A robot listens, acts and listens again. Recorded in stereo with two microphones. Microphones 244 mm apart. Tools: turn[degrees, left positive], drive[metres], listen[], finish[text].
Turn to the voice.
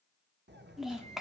Action: turn[30]
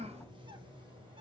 Thought: So it is at 30° right.
Action: turn[-30]
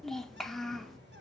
Action: finish[Found it: a child speaking, straight ahead.]